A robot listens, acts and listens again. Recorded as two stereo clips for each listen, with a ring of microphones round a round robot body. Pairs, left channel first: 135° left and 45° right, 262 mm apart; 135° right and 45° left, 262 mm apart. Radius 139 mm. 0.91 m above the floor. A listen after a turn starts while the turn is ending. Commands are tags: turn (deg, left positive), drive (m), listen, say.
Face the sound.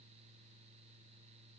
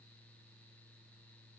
<listen/>
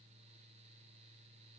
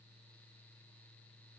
<listen/>
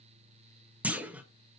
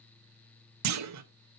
<turn deg="40"/>
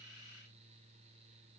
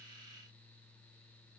<say>Facing where the clunk came from. I can't hear it now.</say>